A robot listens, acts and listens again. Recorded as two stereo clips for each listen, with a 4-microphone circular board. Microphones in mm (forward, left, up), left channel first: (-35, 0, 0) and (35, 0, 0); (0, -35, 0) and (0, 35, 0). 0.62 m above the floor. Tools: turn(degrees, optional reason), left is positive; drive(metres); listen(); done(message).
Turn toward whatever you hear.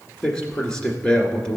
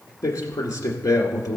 turn(degrees=-110, reason="The man speaking: 110° right.")
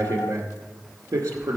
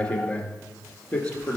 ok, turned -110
turn(degrees=-30, reason="The man speaking is now 30° right.")
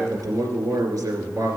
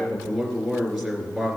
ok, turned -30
done("Facing the man speaking.")